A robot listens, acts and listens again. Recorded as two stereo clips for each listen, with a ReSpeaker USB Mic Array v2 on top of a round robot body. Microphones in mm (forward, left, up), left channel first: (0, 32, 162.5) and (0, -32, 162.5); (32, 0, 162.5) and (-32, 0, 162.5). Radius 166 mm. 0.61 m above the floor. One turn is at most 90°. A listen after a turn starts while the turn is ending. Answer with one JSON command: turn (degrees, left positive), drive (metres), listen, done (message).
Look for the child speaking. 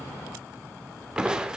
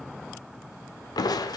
{"listen": true}
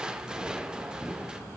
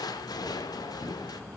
{"listen": true}
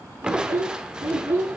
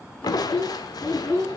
{"turn": -70}
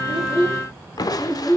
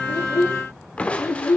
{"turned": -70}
{"turn": 20}
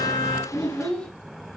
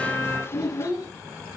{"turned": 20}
{"done": "Facing the child speaking, over 4 m away."}